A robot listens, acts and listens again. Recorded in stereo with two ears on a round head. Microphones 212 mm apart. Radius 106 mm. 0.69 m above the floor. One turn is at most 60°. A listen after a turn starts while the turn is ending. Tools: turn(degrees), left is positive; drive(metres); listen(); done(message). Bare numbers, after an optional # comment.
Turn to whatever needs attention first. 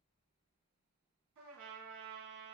listen()
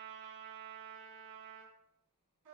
listen()
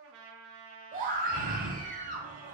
# The scream: about 35° right or 145° right.
turn(-35)
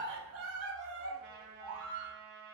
# So it is at 105° right.
turn(-60)
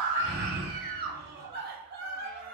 # The scream is now 45° right.
turn(-45)
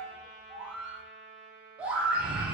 done("Facing the scream.")